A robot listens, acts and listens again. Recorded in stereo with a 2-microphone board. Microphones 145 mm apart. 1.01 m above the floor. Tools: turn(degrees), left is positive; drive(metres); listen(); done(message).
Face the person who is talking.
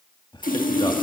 turn(degrees=30)
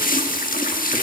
listen()
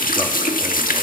listen()
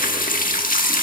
done("I heard a man speaking, but can't make it out now. It was about straight ahead or 120° left.")